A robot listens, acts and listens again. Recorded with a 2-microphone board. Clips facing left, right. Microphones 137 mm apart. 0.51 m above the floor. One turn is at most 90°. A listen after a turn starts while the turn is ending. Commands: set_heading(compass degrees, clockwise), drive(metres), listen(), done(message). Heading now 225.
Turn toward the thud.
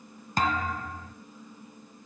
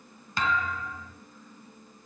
set_heading(180)
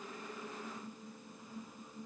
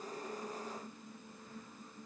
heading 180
listen()
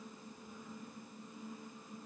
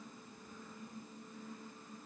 done("I heard a thud, but can't make it out now. It was about straight ahead or 90° left.")